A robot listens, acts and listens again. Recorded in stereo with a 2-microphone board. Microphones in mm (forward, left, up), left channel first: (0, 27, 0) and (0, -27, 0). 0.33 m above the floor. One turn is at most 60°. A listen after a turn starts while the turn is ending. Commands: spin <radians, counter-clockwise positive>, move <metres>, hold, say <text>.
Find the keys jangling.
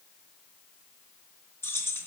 spin 0.96
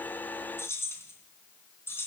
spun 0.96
spin 0.79
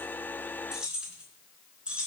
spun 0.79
spin -0.35
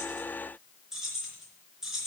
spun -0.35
spin -0.17
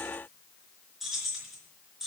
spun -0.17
say Facing the keys jangling, 2 to 4 m away.